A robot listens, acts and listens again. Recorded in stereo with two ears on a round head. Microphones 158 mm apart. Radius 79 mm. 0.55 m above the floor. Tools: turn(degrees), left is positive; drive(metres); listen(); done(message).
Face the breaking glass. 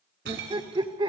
turn(degrees=-65)
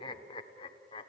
listen()
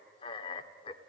done("I heard breaking glass, but can't make it out now. It was about straight ahead or 50° right.")